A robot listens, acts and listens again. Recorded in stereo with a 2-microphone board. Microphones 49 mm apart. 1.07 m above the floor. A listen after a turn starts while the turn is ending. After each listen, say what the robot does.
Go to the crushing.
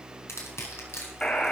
Turn 65° left.
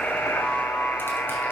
Keep listening.
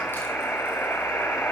Keep listening.
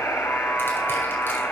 I heard crushing, but can't make it out now. It was about straight ahead or 50° left. I did not reach it.